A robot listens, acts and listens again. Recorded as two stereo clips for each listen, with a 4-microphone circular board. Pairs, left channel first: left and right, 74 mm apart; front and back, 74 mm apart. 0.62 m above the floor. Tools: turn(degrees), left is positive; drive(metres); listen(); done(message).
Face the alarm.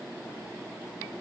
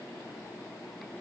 listen()
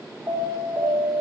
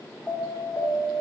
turn(degrees=-70)
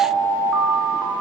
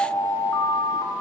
done("Facing the alarm, 1 to 2 m away.")